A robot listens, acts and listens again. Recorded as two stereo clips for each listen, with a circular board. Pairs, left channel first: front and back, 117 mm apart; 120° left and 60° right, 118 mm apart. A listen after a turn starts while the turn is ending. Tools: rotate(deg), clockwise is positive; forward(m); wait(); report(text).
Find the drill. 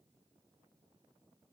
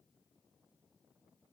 wait()
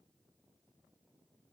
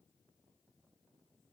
wait()
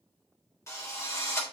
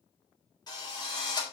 rotate(-65)
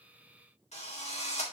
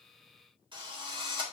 rotate(15)
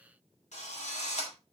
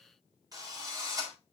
report("Facing the drill.")